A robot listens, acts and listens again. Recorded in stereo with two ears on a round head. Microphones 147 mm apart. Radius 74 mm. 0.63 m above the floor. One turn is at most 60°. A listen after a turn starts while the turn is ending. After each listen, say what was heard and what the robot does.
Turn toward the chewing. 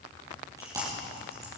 The chewing: about 20° right or 160° right. Turn 20° right.
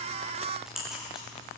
Found it: chewing, straight ahead.